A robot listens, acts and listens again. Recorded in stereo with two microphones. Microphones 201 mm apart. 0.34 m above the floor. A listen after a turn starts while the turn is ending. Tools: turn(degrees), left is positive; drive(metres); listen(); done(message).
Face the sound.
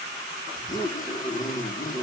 turn(degrees=40)
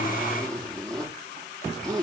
done("Facing the zipper, over 4 m away.")